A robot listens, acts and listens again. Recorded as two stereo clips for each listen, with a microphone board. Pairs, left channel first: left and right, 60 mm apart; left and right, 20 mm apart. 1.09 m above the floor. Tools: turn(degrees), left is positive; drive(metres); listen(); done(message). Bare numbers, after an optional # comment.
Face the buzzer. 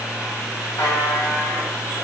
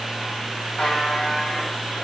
turn(90)
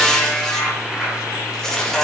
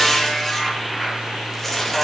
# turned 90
# So it is at 10° right.
turn(-10)
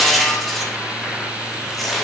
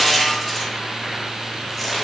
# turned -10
listen()
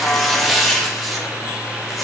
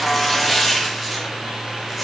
done("Found it: a buzzer, straight ahead, 2 to 4 m away.")